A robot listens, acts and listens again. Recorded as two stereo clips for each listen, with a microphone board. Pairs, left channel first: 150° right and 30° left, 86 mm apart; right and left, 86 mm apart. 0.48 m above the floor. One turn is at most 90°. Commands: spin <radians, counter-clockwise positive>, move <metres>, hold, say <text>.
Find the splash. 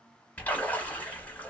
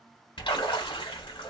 spin -1.40
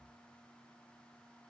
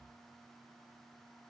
say Facing where the splash came from. I can't hear it now.